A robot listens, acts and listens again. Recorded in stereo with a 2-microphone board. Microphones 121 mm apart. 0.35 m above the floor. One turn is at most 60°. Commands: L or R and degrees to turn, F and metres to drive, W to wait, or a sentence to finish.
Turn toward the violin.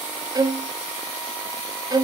R30
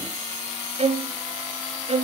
R60
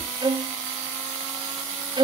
R45
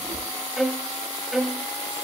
Found it: a violin, straight ahead, under 1 m away.